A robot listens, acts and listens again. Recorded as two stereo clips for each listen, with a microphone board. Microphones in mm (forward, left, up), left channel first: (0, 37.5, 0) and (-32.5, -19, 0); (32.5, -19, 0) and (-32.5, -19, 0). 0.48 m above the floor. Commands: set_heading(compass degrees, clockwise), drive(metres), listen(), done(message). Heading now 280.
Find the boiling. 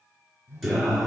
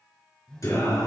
listen()
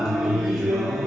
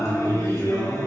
listen()
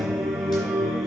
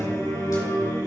done("I can't make out boiling to turn to.")